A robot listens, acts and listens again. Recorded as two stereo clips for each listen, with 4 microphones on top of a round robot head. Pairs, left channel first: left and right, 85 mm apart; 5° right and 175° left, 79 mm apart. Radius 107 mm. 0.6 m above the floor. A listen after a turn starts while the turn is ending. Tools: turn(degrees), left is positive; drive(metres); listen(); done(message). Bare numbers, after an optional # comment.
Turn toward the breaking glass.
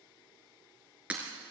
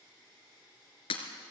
# The breaking glass: 10° right.
turn(-10)
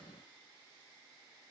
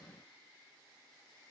done("I heard breaking glass from this way, but can't make it out now.")